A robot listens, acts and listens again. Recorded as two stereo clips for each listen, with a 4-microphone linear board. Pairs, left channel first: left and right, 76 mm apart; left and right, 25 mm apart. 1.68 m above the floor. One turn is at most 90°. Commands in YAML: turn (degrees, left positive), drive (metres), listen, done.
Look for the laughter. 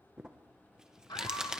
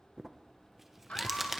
turn: 70
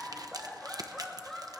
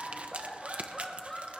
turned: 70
done: "Facing the laughter."